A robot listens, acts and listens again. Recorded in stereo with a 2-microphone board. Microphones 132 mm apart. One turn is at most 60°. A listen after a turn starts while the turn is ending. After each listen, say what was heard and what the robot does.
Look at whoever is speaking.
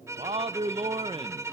The man speaking: about 45° right or 135° right. Turn 45° right.
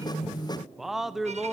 Facing the man speaking, 1 to 2 m away.